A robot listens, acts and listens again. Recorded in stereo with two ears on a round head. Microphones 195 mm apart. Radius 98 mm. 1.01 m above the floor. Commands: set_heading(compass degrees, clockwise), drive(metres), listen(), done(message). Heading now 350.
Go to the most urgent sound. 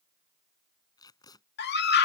set_heading(300)
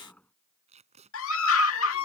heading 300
set_heading(225)
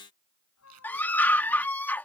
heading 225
set_heading(215)
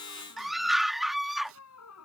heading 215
drive(1.0)
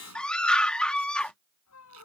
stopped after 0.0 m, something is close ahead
done("Blocked. The scream is further on, straight ahead.")